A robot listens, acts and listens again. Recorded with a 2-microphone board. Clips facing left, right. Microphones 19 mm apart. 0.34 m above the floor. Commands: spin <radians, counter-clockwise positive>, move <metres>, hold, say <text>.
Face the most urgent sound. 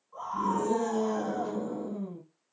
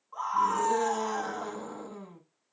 spin -1.05
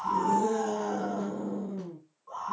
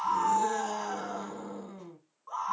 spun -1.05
spin -0.79
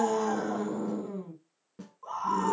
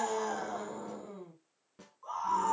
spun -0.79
spin 0.17
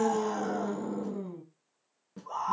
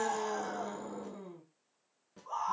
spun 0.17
say Facing the scream.